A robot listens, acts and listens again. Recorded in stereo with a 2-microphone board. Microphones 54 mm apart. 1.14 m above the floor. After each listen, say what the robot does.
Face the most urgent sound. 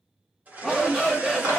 Turn 30° left.
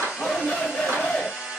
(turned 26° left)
Turn 155° left.
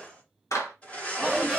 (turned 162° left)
Facing the shout.